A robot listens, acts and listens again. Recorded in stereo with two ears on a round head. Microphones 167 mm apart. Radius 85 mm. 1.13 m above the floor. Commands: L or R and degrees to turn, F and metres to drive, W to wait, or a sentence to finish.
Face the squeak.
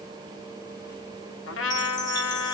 W
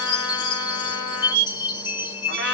R60
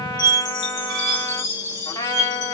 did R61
R55
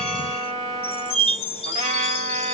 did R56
Found it: a squeak, straight ahead.